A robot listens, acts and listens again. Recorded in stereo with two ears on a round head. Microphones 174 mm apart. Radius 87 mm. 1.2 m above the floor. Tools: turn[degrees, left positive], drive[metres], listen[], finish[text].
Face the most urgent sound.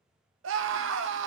Thought: The scream: about 70° right or 110° right.
Action: turn[-70]
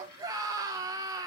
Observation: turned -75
Thought: So it is at 20° right.
Action: turn[-20]
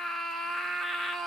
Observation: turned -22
Action: finish[Found it: a scream, straight ahead.]